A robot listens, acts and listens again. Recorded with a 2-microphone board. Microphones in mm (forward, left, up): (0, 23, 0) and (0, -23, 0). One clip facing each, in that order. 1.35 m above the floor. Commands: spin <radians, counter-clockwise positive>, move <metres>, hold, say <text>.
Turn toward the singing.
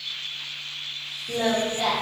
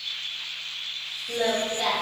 spin 0.52
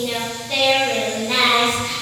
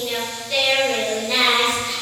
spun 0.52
spin 2.27
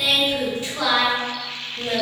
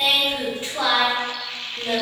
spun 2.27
spin -0.52
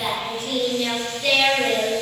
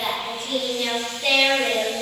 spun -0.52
spin -0.26
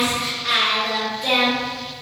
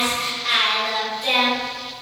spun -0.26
say Facing the singing, under 1 m away.